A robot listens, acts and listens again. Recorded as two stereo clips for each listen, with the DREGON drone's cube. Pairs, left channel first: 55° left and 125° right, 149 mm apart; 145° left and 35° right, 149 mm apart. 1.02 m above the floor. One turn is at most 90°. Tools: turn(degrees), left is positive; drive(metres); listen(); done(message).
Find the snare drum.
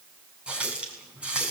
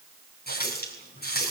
listen()
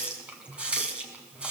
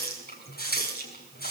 listen()
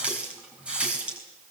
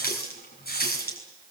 done("I can't make out a snare drum, only a running tap.")